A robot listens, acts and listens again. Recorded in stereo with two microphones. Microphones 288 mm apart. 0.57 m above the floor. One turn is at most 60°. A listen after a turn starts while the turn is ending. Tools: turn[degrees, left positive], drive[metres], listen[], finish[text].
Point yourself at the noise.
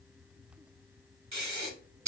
Thought: The breathing: about 70° right or 110° right.
Action: turn[-60]
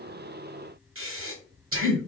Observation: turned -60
Thought: So it is at 50° right.
Action: turn[-50]
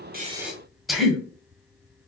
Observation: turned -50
Action: finish[Facing the breathing.]